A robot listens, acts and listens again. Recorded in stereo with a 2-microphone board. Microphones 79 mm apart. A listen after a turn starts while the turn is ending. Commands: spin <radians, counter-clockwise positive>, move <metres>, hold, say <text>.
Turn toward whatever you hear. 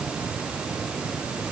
hold
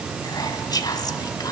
spin 0.96
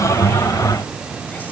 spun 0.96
hold
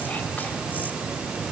hold
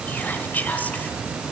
spin 0.44
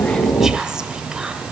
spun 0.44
spin -0.17
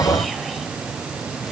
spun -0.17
hold
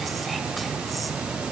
hold
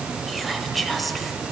say Facing the whispering, 1 to 2 m away.